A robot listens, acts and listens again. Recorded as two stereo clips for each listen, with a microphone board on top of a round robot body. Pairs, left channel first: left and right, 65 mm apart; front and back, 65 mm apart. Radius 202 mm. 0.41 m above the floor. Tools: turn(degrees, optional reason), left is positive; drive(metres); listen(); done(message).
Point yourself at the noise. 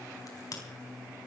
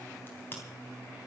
turn(degrees=60, reason="The crack: 60° left.")
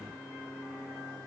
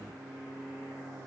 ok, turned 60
done("I heard a crack from this way, but can't make it out now.")